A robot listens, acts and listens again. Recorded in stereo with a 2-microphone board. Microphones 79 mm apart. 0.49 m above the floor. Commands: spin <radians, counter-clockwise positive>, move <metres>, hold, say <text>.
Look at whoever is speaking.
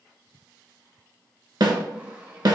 hold
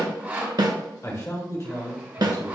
spin 0.70
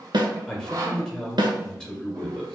spin 0.17
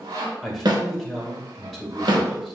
say Found it: a man speaking, straight ahead, 1 to 2 m away.